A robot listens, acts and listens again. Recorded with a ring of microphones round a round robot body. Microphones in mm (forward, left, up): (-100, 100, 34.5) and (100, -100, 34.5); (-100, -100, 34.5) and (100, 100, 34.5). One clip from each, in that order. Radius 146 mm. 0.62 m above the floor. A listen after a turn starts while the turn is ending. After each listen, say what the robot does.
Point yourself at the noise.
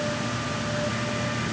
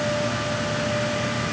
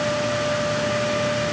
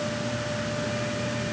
Keep listening.
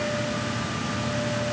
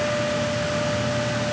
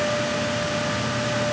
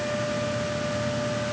Keep listening.
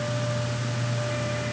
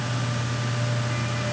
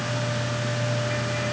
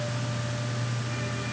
I can't make out anything.